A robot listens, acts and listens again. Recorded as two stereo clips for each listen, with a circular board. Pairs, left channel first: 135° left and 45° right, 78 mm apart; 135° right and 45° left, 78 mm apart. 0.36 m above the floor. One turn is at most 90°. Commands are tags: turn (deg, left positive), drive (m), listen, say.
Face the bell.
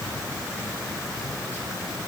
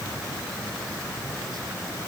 <listen/>
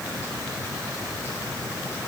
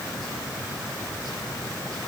<listen/>
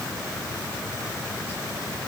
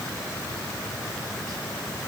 <say>I can't make out a bell.</say>